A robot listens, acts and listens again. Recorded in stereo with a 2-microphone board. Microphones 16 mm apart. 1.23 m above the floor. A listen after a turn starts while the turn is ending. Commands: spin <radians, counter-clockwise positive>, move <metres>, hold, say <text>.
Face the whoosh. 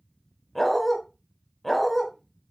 hold
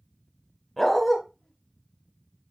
hold
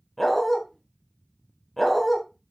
say I can't make out a whoosh to turn to.